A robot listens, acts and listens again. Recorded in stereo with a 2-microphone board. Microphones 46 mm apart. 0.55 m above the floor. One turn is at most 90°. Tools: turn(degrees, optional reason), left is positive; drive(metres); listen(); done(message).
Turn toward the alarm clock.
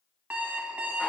turn(degrees=-35, reason="The alarm clock: about 35° right or 145° right.")
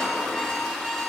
done("Facing the alarm clock, 1 to 2 m away.")